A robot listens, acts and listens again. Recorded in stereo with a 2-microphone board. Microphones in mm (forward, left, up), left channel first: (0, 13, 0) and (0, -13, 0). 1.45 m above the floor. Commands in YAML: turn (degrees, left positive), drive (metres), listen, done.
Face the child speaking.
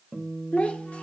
turn: 70
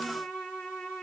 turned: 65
listen: true
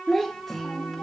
turn: 20
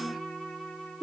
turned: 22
done: "Facing the child speaking."